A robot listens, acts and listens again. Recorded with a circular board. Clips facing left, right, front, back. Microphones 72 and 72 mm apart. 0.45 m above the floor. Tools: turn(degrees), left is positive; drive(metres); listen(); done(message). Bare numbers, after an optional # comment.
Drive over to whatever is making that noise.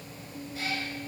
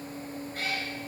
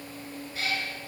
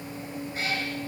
# The cat meowing: 125° right.
turn(-125)
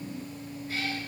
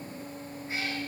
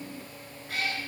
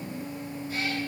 # The cat meowing is now 25° right.
turn(-25)
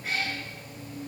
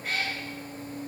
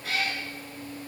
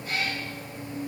drive(1.0)
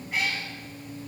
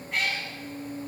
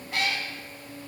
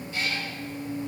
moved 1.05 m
drive(1.0)
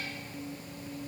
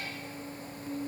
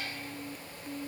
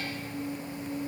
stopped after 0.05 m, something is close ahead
listen()
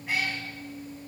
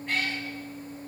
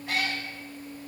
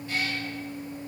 # The cat meowing is now 10° left.
turn(10)
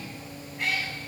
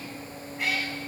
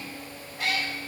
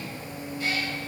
done("I am next to the cat meowing.")